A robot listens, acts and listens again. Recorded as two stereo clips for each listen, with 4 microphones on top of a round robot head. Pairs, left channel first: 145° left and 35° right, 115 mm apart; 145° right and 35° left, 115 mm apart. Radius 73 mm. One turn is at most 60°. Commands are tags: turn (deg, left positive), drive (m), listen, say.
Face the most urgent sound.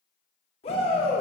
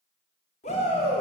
<turn deg="-60"/>
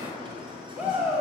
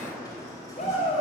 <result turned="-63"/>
<turn deg="-60"/>
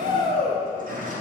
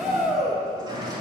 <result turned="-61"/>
<turn deg="-55"/>
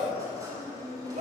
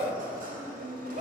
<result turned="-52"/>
<say>Facing the shout, 2 to 4 m away.</say>